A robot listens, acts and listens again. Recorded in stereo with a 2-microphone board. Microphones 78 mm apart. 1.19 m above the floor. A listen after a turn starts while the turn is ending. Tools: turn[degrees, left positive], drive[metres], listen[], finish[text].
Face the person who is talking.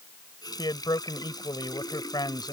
Thought: The man speaking: about 65° left or 115° left.
Action: turn[65]
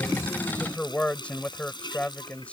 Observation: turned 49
Thought: So it is at 15° left.
Action: turn[15]
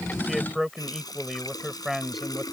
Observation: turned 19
Action: finish[Facing the man speaking.]